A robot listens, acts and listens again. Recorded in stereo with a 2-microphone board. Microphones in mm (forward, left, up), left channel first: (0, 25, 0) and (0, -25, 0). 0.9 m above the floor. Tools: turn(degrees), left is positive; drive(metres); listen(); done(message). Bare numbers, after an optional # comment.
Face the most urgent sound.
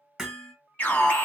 # The alarm: about 30° left or 150° left.
turn(30)
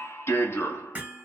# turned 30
# So it is at 115° left.
turn(115)
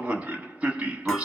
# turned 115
# The alarm is now 35° right.
turn(-35)
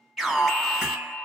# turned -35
done("Facing the alarm, 1 to 2 m away.")